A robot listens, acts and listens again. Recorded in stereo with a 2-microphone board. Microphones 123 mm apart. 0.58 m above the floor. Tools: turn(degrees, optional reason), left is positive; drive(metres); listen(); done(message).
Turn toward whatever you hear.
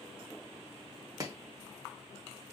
turn(degrees=-30, reason="The chopping: about 30° right or 150° right.")
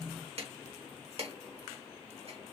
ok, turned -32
turn(degrees=-120, reason="So it is at 120° right.")
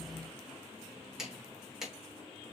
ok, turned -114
done("Found it: chopping, straight ahead.")